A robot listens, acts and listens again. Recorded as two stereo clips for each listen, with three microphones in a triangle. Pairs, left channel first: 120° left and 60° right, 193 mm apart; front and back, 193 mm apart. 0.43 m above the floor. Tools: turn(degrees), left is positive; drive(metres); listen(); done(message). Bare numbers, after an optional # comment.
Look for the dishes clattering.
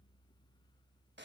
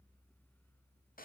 listen()
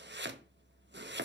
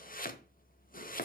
listen()
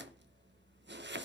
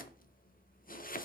done("I can't make out dishes clattering, only chopping.")